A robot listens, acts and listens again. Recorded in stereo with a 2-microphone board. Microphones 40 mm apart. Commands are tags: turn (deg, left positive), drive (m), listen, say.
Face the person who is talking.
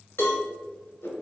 <listen/>
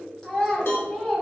<turn deg="15"/>
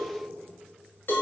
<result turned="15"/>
<listen/>
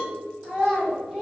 <say>Found it: a child speaking, straight ahead.</say>